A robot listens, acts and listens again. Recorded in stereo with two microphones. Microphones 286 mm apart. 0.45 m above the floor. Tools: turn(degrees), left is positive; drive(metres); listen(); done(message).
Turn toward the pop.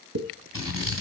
turn(degrees=-65)
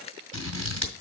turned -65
listen()
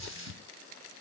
done("I heard a pop, but can't make it out now. It was about straight ahead or 50° right.")